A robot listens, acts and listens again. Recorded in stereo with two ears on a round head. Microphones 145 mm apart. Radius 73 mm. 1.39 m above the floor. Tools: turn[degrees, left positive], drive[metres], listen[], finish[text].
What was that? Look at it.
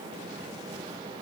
Action: listen[]
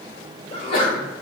Thought: The sneeze: about 35° left or 145° left.
Action: turn[35]
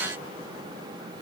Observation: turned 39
Action: listen[]
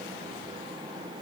Action: finish[I heard a sneeze, but can't make it out now. It was about 5° right or 105° left.]